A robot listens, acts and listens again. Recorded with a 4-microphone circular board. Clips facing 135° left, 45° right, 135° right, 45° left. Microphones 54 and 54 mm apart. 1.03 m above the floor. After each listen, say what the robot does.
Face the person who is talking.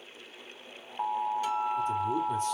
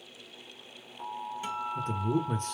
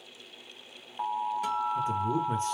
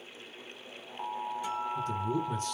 Turn 75° right.
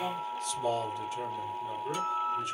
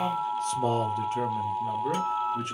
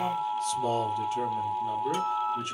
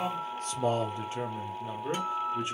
Turn 15° right.
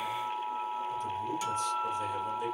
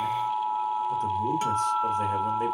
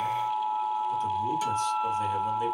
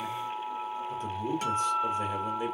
Keep listening.
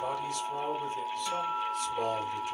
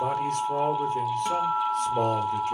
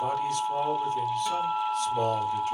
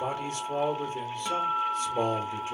Turn 10° right.
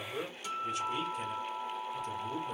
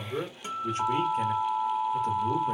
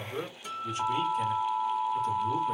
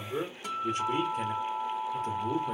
Facing the man speaking, 2 to 4 m away.